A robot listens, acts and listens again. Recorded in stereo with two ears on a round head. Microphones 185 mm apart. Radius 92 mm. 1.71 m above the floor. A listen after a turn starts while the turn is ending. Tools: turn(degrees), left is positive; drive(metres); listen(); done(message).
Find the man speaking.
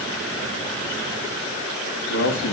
turn(degrees=75)
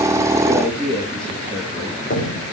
done("Found it: a man speaking, straight ahead, 2 to 4 m away.")